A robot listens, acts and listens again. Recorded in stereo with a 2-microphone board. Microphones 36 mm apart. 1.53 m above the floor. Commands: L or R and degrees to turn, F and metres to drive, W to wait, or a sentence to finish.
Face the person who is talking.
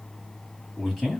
L30
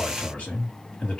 L140
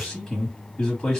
L15
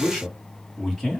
Facing the man speaking, 1 to 2 m away.